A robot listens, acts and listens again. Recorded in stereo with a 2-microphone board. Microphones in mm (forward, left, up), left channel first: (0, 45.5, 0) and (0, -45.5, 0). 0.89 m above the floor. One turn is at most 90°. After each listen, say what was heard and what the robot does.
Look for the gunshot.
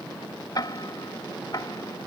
Keep listening.
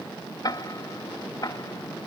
Keep listening.
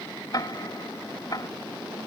I can't make out a gunshot, only ticking.